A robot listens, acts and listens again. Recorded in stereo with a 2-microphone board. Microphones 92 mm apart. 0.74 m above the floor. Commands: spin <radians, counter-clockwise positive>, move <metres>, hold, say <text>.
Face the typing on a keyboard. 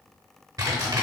spin -0.70
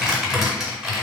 say Facing the typing on a keyboard.